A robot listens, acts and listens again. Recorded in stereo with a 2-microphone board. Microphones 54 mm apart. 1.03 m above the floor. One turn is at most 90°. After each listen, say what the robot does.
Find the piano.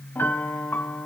Turn 45° left.
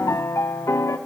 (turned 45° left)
Turn 90° left.
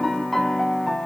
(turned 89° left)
Facing the piano.